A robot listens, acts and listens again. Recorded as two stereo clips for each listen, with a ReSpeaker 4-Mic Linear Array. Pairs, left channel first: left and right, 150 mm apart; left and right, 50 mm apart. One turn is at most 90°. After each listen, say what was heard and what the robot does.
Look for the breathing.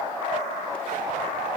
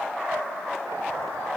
Keep listening.
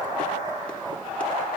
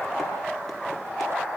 Keep listening.
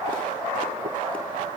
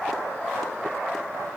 I can't make out breathing to turn to.